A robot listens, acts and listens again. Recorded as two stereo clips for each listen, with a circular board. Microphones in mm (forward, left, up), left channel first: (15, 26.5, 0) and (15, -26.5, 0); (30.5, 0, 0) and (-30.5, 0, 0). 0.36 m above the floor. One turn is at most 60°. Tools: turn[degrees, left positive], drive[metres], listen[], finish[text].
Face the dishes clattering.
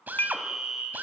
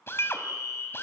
Thought: The dishes clattering: 40° left.
Action: turn[40]
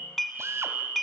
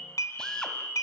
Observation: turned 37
Action: finish[Facing the dishes clattering, 1 to 2 m away.]